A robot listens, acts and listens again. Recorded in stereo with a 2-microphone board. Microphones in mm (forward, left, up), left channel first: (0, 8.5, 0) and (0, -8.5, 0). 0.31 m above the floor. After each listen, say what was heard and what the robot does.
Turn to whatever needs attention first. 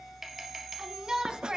The shout: about 50° right or 130° right. Turn 50° right.
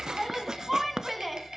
So it is at 10° right. Turn 10° right.
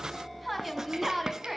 Found it: a shout, straight ahead, 2 to 4 m away.